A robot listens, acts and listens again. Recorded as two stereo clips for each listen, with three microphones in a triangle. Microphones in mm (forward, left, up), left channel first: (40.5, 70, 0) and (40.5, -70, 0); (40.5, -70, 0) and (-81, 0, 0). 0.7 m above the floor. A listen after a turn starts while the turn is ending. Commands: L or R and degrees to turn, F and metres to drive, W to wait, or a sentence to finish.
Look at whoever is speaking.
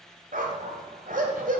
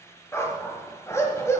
W
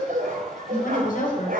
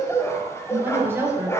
L75
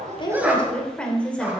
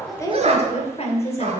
L10
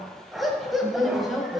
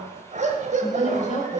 Facing the woman speaking, 2 to 4 m away.